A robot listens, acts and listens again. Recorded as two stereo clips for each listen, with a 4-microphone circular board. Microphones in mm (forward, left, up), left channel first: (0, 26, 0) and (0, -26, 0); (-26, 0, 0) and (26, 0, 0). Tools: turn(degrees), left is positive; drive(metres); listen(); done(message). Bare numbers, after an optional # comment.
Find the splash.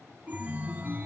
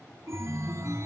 listen()
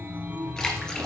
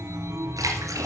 # The splash: 10° left.
turn(10)
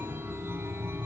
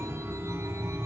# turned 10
done("Facing where the splash came from. I can't hear it now.")